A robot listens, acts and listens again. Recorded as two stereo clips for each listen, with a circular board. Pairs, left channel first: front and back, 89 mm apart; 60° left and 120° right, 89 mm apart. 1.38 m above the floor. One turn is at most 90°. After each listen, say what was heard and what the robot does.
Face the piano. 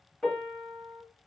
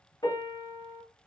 The piano: 80° left. Turn 80° left.
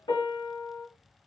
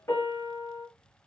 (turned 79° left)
Found it: a piano, straight ahead, 1 to 2 m away.